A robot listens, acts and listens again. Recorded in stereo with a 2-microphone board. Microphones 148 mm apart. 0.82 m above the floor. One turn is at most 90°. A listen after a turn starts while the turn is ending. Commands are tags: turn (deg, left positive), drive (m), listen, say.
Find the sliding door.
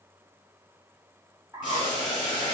<listen/>
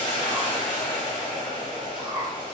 <listen/>
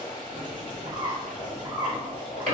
<turn deg="-60"/>
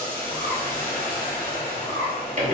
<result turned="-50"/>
<turn deg="-60"/>
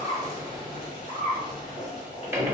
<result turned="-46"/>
<turn deg="-15"/>
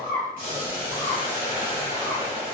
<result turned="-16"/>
<listen/>
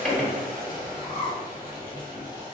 <say>Facing the sliding door.</say>